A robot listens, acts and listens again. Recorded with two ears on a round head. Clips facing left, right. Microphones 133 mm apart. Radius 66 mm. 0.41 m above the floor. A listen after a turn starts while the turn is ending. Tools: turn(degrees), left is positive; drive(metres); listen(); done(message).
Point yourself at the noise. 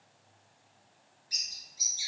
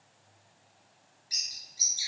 turn(degrees=-30)
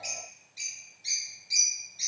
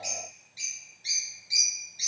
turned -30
turn(degrees=15)
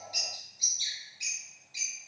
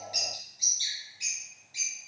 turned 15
done("Facing the bird, 1 to 2 m away.")